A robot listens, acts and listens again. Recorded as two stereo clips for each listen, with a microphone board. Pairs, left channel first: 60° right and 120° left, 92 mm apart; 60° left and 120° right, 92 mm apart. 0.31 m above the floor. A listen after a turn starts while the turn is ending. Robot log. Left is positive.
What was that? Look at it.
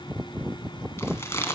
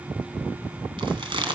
note: The chewing: 120° right.
cmd yaw -120
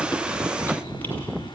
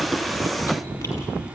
cmd idle
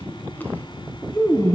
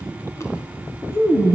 end: Facing the chewing, 2 to 4 m away.